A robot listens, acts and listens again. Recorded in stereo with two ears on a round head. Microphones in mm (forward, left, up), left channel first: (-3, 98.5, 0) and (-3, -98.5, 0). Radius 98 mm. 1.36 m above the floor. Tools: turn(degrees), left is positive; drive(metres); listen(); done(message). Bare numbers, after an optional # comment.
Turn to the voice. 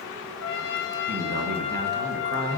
# The man speaking: about 45° right or 135° right.
turn(-45)
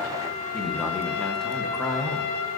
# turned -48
done("Found it: a man speaking, straight ahead.")